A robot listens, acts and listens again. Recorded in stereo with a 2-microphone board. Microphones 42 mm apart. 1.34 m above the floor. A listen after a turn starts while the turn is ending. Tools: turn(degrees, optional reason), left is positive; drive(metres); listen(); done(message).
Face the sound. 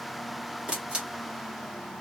turn(degrees=-30, reason="The camera shutter: about 30° right or 150° right.")
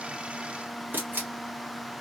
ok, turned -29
turn(degrees=-120, reason="So it is at 120° right.")
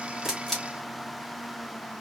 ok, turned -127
done("Found it: a camera shutter, straight ahead, 1 to 2 m away.")